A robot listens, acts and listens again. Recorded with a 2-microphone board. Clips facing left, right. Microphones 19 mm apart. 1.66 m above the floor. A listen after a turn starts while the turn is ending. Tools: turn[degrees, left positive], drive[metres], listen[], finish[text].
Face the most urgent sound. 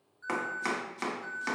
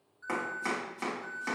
Action: turn[30]
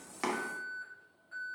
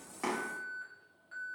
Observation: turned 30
Thought: So it is at 25° right.
Action: turn[-25]
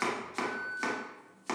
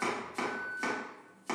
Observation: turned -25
Thought: The alarm is now 10° left.
Action: turn[10]
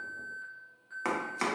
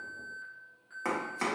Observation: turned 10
Action: finish[Facing the alarm, 1 to 2 m away.]